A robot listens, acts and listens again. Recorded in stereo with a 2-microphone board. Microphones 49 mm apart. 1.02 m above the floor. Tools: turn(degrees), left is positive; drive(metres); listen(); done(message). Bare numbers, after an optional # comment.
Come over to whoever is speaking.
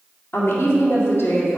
# The woman speaking: about 50° left or 130° left.
turn(50)
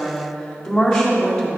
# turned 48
# So it is at 10° left.
turn(10)
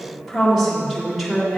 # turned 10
drive(1.0)
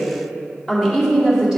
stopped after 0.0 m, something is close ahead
done("Something is in my way. I am facing the woman speaking but have not reached it.")